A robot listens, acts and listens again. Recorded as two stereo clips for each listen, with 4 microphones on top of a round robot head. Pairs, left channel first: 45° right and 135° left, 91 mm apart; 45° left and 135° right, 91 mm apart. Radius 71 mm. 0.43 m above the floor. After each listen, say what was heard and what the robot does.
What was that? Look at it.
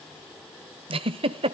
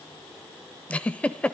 The giggle: 125° left. Turn 125° left.
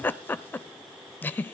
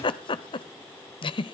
The giggle is now 20° left. Turn 20° left.
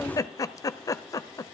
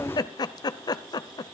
Found it: a giggle, straight ahead, under 1 m away.